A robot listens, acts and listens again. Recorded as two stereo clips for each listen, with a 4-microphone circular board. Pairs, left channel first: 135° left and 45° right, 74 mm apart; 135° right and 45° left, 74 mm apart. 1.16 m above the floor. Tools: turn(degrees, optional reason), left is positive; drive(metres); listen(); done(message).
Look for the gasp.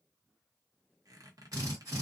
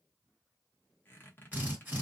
listen()
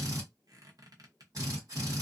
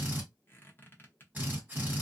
listen()
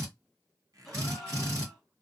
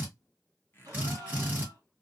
turn(degrees=45, reason="The gasp: 45° left.")
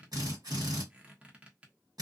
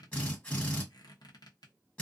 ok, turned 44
done("Facing where the gasp came from. I can't hear it now.")